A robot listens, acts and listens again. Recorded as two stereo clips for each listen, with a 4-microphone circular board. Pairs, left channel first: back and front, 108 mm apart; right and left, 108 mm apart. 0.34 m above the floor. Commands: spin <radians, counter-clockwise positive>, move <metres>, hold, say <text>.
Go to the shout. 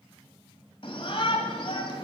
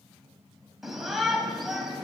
spin 3.05
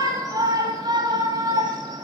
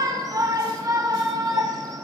spin 0.70
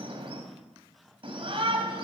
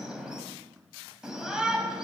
move 1.0
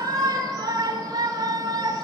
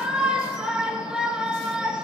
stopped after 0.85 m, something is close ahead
spin 0.26
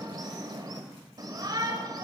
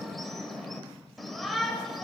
say Arrived at the shout, straight ahead.